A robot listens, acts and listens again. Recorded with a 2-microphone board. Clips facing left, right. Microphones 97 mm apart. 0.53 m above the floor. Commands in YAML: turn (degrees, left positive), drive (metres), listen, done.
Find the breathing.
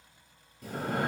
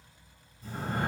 turn: 70
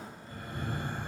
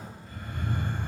turn: 35
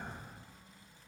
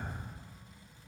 done: "Found it: breathing, straight ahead."